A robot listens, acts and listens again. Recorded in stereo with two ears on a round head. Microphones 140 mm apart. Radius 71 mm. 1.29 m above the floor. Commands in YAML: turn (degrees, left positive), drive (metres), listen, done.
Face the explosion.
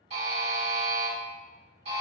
listen: true
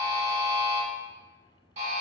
listen: true
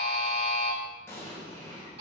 turn: 15
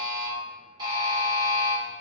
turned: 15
listen: true
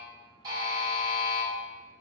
done: "I heard an explosion, but can't make it out now. It was about straight ahead or 150° left."